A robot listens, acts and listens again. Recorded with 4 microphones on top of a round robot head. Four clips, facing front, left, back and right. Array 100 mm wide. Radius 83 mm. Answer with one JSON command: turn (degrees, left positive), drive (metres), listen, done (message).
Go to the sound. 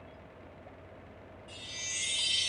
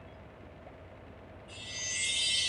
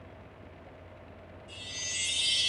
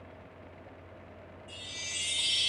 {"turn": -60}
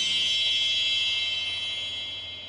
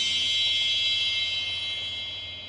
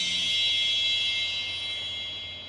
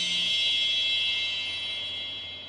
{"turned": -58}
{"drive": 1.0}
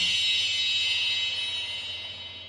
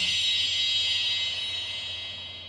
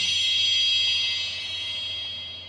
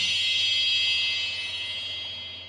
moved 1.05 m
{"drive": 1.0}
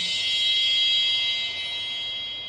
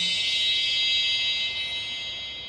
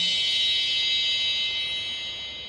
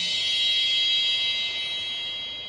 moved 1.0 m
{"turn": -10}
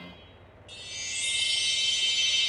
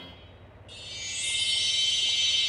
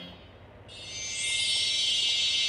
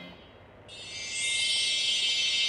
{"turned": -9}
{"drive": 1.0}
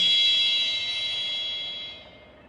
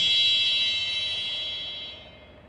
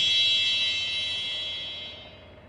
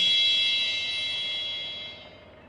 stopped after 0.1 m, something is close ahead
{"done": "I am next to the chime."}